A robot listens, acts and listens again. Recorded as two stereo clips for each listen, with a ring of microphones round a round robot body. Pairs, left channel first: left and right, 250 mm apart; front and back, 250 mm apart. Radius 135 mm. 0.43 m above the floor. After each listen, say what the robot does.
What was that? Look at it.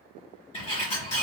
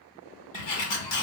Turn 20° left.
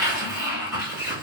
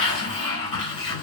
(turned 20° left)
Found it: a sliding door, straight ahead.